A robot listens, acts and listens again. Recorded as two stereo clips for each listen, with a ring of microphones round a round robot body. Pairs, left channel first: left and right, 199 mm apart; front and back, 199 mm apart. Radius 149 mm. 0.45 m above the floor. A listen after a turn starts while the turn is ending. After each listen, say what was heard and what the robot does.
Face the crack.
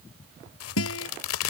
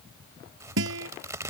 The crack: 100° left. Turn 100° left.
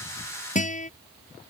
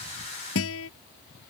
I heard a crack from this way, but can't make it out now.